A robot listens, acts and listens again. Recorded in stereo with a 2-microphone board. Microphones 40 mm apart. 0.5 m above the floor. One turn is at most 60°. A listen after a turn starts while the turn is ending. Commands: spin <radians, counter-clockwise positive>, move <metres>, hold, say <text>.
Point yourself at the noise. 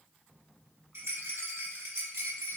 spin -1.05
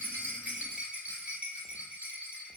spin -0.61
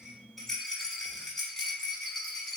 spin 0.17
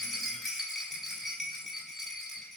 say Facing the rattle, under 1 m away.